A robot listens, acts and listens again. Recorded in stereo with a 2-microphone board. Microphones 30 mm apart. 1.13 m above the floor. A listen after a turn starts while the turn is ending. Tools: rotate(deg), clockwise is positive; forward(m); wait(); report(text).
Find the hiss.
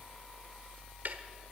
wait()
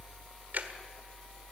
wait()
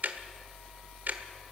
report("I can't make out a hiss, only ticking.")